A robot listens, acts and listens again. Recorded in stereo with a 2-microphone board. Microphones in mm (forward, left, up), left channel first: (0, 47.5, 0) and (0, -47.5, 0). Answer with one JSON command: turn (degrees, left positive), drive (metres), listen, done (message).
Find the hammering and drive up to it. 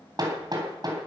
{"turn": -45}
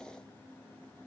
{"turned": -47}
{"listen": true}
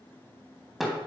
{"drive": 1.0}
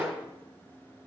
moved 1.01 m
{"drive": 1.0}
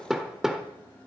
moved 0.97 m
{"drive": 1.0}
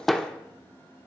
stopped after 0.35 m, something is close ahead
{"done": "Arrived at the hammering, straight ahead."}